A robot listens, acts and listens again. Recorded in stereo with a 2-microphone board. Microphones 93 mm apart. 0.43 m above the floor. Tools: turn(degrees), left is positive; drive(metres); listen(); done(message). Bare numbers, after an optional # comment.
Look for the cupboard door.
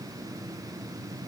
listen()
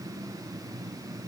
listen()
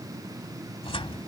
turn(90)
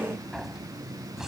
done("Facing the cupboard door.")